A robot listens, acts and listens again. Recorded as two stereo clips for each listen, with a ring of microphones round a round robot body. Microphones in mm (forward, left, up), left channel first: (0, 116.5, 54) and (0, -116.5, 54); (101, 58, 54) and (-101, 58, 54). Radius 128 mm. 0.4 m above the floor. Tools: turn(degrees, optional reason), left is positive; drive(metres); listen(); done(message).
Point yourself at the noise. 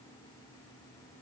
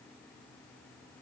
listen()
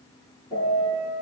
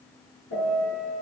turn(degrees=15, reason="The piano: 15° left.")
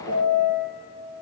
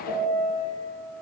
done("Found it: a piano, straight ahead, over 4 m away.")